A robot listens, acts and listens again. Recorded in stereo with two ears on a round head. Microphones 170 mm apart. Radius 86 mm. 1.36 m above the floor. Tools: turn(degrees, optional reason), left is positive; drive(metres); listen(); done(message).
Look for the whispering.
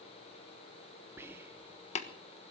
turn(degrees=-30)
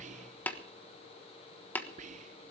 turn(degrees=-135, reason="So it is at 135° right.")
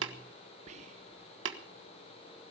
turn(degrees=-40, reason="The whispering is now 40° right.")
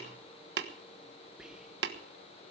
done("Found it: whispering, straight ahead, under 1 m away.")